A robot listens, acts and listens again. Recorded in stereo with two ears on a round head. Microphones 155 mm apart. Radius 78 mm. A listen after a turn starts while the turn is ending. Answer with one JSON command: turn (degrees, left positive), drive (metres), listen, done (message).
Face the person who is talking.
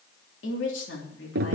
{"turn": 90}
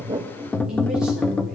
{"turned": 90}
{"listen": true}
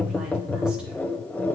{"listen": true}
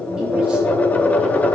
{"done": "Facing where the woman speaking came from. I can't hear it now."}